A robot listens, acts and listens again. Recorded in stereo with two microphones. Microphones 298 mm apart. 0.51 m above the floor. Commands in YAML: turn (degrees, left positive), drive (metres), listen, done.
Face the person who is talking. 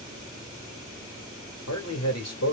turn: 60
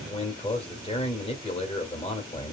turn: 25
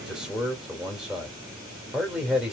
done: "Found it: a man speaking, straight ahead."